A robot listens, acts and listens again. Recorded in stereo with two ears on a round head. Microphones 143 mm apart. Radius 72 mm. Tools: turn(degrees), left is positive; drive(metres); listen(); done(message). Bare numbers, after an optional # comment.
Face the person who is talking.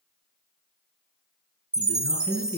turn(90)
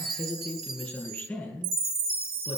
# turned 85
done("Found it: a man speaking, straight ahead, over 4 m away.")